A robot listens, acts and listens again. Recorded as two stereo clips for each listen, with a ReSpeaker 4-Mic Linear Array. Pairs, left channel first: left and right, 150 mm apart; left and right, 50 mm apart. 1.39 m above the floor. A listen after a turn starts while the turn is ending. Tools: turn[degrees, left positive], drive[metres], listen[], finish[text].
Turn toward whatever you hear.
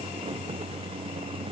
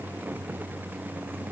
Action: listen[]
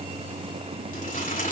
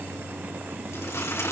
Thought: The crumpling: about 65° left or 115° left.
Action: turn[65]
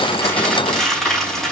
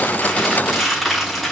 Action: finish[Found it: crumpling, straight ahead, over 4 m away.]